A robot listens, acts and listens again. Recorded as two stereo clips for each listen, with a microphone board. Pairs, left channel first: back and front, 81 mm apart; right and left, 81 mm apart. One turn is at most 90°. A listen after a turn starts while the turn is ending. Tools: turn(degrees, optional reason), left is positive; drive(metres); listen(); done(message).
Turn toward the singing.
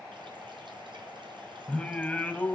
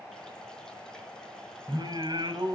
turn(degrees=90, reason="The singing: 110° left.")
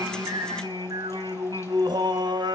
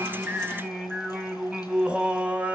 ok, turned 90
turn(degrees=15, reason="The singing is now 15° left.")
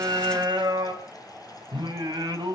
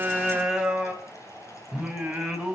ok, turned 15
turn(degrees=10, reason="The singing is now 10° left.")
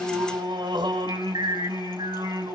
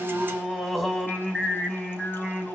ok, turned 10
done("Facing the singing, 2 to 4 m away.")